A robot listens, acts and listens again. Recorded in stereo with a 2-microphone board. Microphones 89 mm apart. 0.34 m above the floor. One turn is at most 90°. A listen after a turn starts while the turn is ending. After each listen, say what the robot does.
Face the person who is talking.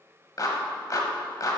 Keep listening.
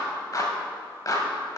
Keep listening.
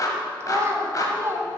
Turn 35° right.
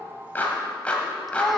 Found it: a child speaking, straight ahead.